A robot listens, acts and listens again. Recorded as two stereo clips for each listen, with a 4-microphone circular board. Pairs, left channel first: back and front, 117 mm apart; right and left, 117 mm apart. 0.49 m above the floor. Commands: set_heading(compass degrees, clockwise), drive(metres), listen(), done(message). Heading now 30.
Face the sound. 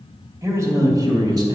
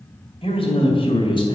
set_heading(80)
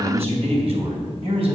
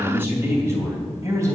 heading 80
set_heading(50)
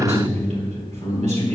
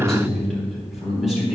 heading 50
done("Facing the man speaking, 2 to 4 m away.")